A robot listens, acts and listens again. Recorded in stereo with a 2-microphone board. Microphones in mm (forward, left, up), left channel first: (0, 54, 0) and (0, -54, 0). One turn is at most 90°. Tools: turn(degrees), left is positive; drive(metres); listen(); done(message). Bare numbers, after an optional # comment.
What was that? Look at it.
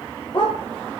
# The dog barking: about 45° left or 135° left.
turn(45)
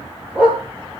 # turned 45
# So it is at 10° right.
turn(-10)
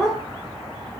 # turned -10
done("Found it: a dog barking, straight ahead, 2 to 4 m away.")